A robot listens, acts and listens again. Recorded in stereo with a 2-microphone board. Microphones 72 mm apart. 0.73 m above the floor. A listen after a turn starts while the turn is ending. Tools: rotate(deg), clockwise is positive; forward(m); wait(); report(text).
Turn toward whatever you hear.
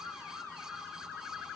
wait()
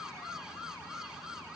wait()
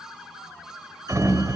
rotate(50)
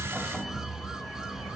report("Found it: a sliding door, straight ahead, 2 to 4 m away.")